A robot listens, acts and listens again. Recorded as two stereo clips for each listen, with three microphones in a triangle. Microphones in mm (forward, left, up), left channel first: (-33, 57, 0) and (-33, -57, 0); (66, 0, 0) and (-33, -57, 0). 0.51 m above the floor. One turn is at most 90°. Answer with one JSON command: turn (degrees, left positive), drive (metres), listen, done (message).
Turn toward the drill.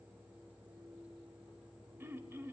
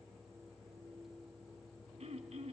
{"listen": true}
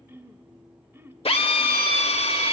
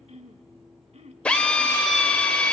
{"turn": 90}
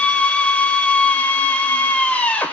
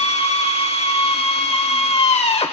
{"turn": 15}
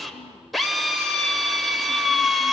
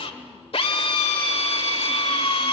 {"done": "Found it: a drill, straight ahead."}